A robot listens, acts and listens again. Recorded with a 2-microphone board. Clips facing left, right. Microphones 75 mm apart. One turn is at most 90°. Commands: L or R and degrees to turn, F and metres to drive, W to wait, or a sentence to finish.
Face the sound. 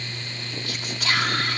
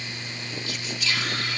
L60
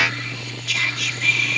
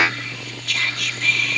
Facing the whispering.